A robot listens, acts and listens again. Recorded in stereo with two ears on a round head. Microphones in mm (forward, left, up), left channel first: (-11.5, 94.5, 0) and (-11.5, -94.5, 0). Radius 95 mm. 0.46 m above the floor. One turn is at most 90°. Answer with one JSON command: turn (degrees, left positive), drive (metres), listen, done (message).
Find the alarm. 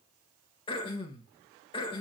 {"listen": true}
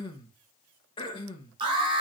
{"turn": -25}
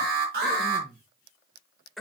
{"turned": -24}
{"turn": -90}
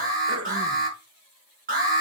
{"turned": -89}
{"turn": -40}
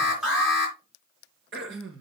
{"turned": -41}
{"done": "Found it: an alarm, straight ahead, over 4 m away."}